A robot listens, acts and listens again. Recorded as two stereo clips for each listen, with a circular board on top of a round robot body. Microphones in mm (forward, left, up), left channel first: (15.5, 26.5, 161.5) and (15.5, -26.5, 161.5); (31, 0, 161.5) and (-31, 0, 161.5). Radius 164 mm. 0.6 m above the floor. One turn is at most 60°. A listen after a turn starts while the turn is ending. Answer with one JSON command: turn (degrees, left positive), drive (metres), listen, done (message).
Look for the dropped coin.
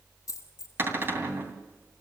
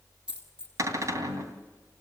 {"turn": 60}
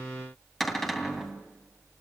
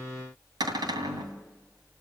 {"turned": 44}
{"turn": 60}
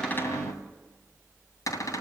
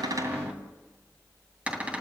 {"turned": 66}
{"done": "Facing where the dropped coin came from. I can't hear it now."}